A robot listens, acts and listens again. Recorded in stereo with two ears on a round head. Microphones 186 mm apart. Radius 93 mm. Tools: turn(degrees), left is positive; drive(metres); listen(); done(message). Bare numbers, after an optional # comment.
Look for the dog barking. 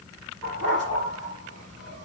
turn(-90)
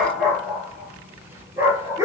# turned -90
# So it is at 15° right.
turn(-15)
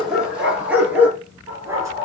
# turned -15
# The dog barking is now 15° right.
turn(-15)
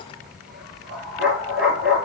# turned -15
done("Found it: a dog barking, straight ahead.")